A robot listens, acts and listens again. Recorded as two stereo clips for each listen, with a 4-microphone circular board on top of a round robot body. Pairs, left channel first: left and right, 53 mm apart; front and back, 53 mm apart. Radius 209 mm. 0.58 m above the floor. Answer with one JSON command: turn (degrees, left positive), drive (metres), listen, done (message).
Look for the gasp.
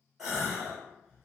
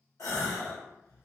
{"turn": -10}
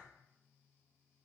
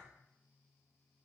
{"done": "Facing where the gasp came from. I can't hear it now."}